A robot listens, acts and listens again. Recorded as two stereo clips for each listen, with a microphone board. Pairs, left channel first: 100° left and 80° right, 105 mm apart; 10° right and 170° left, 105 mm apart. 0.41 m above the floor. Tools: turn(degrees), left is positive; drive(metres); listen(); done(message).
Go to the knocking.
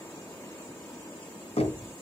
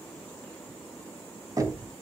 turn(degrees=115)
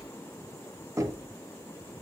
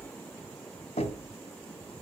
turn(degrees=-15)
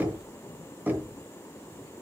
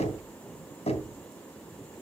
drive(metres=1.0)
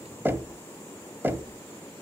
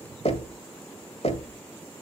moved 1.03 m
turn(degrees=-10)
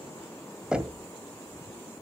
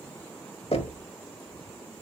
drive(metres=1.0)
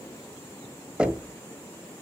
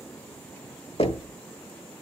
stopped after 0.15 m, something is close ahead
done("I am next to the knocking.")